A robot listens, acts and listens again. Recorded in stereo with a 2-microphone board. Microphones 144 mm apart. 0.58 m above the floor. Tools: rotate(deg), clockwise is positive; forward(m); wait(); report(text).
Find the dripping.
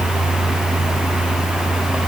wait()
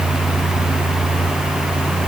wait()
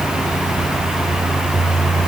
report("I can't make out dripping to turn to.")